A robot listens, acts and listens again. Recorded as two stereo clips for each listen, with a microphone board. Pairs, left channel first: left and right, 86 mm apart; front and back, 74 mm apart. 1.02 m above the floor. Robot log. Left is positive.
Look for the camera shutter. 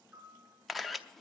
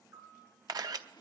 note: The camera shutter: straight behind.
cmd yaw +180
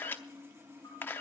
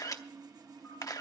note: The camera shutter is now 25° left.
cmd yaw +25
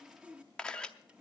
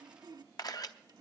note: The camera shutter is now 10° left.
cmd yaw +10
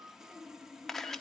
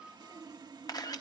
end: Found it: a camera shutter, straight ahead.